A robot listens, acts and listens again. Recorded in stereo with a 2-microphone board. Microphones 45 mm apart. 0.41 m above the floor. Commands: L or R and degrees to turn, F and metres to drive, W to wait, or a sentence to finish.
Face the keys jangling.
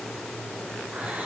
W
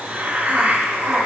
W
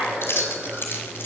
L60
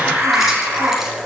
W
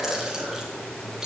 W
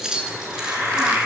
R10
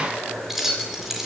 Facing the keys jangling, over 4 m away.